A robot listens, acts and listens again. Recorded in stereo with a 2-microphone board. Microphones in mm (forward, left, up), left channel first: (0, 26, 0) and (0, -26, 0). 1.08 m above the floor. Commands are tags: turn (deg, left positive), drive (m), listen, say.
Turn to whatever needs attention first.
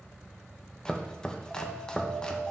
<turn deg="-30"/>
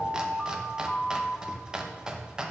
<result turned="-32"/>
<turn deg="25"/>
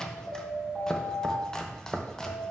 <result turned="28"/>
<say>Found it: an alarm, straight ahead.</say>